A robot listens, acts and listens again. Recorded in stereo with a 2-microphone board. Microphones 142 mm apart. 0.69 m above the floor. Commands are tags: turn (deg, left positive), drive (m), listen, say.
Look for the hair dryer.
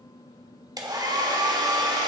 <turn deg="-30"/>
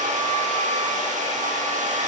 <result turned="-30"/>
<turn deg="-120"/>
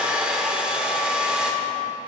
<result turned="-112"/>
<say>Facing the hair dryer, 1 to 2 m away.</say>